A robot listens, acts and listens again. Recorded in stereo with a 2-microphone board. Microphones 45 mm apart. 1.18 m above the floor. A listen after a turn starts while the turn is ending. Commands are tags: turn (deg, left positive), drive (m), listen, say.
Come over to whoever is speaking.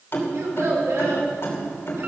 <turn deg="-90"/>
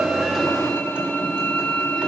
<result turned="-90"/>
<listen/>
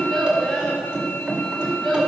<drive m="1.0"/>
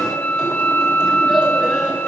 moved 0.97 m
<listen/>
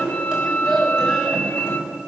<drive m="1.0"/>
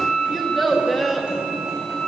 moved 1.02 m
<drive m="1.0"/>
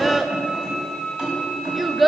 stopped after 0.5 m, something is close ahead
<say>I am next to the child speaking.</say>